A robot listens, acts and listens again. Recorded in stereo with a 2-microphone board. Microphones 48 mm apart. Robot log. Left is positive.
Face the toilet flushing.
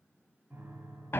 cmd idle
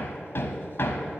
cmd idle
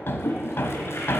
note: The toilet flushing: about 60° left or 120° left.
cmd yaw +60
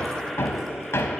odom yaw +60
cmd idle
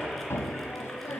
cmd idle
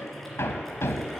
end: I heard a toilet flushing, but can't make it out now. It was about straight ahead or 60° left.